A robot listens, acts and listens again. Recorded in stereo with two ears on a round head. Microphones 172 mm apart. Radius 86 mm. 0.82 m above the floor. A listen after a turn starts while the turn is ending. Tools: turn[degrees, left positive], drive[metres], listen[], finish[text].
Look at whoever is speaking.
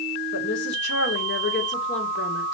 Thought: The woman speaking: about 65° left or 115° left.
Action: turn[65]
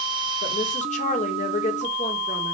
Thought: So it is at 40° left.
Action: turn[40]
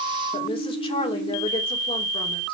Thought: The woman speaking is now 30° left.
Action: turn[30]
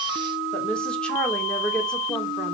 Action: finish[Facing the woman speaking.]